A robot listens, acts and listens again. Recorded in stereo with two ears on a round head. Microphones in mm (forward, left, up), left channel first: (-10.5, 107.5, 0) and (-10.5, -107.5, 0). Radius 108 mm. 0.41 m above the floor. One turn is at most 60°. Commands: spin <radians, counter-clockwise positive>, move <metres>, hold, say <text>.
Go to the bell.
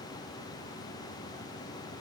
hold
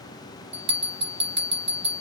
spin -0.35
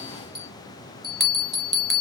move 1.0
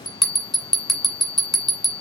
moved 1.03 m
move 1.0
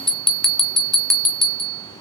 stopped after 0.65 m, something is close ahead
say Arrived at the bell, straight ahead.